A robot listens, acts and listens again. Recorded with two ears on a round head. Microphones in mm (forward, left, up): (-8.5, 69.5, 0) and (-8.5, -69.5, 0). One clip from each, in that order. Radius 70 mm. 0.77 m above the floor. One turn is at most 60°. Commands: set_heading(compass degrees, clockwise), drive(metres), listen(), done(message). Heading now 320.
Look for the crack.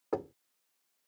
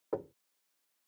listen()
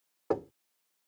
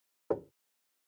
listen()
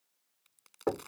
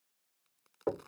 set_heading(265)
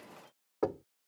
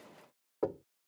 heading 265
listen()
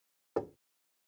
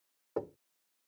done("I heard a crack, but can't make it out now. It was about straight ahead or 70° left.")